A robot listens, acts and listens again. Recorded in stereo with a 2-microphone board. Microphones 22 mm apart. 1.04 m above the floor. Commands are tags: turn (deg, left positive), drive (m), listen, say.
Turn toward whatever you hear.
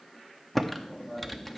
<turn deg="30"/>
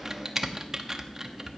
<turn deg="-20"/>
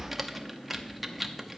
<turn deg="-10"/>
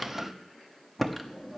<say>Found it: typing on a keyboard, straight ahead.</say>